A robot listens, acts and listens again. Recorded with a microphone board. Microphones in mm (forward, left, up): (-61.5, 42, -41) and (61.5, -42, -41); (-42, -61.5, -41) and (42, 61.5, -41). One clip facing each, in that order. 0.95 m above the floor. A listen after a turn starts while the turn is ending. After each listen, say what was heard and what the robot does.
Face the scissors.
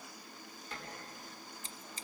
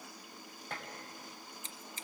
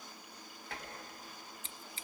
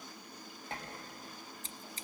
The scissors: 100° left. Turn 100° left.
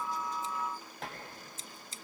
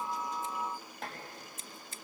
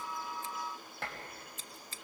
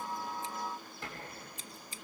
The scissors is now 15° right. Turn 15° right.
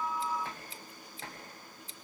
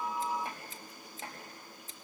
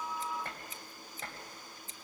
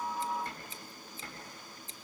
Found it: scissors, straight ahead.